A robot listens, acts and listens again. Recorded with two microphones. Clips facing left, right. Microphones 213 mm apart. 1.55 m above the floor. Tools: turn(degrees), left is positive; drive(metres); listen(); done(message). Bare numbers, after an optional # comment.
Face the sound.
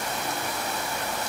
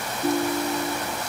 # The ringtone: about 60° right or 120° right.
turn(-60)
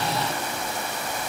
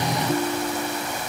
# So it is at 55° right.
turn(-55)
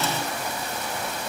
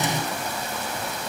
listen()
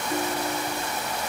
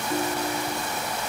done("Found it: a ringtone, straight ahead.")